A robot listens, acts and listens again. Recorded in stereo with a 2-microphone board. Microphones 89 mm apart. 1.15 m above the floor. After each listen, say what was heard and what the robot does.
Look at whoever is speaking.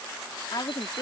The woman speaking: about 60° left or 120° left. Turn 60° left.
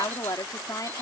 So it is at 45° left. Turn 45° left.
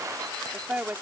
The woman speaking is now 20° right. Turn 20° right.
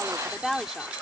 Found it: a woman speaking, straight ahead.